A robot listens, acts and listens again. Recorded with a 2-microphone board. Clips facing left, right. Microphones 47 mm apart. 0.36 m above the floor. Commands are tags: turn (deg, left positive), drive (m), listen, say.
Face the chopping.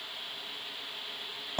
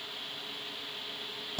<listen/>
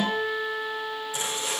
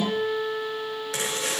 <turn deg="-90"/>
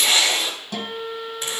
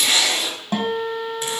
<say>Found it: chopping, straight ahead.</say>